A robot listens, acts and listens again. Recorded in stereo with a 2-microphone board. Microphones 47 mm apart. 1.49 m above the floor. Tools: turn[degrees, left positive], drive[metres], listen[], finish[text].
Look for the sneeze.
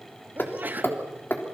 Thought: The sneeze: about 40° right or 140° right.
Action: turn[-40]
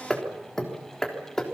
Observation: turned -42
Action: listen[]
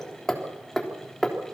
Action: finish[I heard a sneeze, but can't make it out now. It was about straight ahead or 100° right.]